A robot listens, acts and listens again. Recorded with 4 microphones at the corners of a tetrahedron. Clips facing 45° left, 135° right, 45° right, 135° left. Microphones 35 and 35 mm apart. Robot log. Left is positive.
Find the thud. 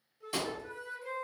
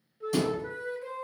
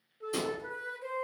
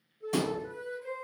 note: The thud: 110° left.
cmd yaw +110
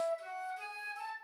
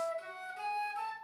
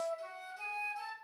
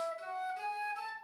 end: I heard a thud from this way, but can't make it out now.